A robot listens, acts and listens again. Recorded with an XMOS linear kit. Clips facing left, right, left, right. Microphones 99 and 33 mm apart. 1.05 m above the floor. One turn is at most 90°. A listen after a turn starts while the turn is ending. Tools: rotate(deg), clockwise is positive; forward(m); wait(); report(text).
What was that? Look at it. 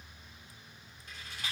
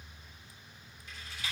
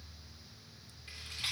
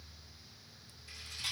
rotate(-50)
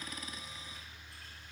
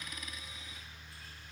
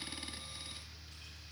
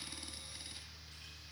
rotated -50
wait()
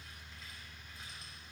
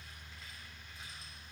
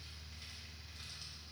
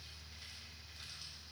wait()
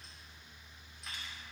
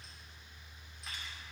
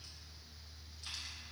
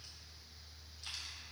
report("I heard a rattle, but can't make it out now. It was about straight ahead or 80° left.")